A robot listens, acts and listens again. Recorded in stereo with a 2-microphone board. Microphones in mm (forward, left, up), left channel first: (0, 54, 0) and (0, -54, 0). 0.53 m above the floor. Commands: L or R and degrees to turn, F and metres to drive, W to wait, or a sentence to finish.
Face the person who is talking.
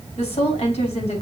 L90
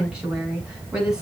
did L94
R10
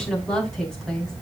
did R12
Found it: a woman speaking, straight ahead, over 4 m away.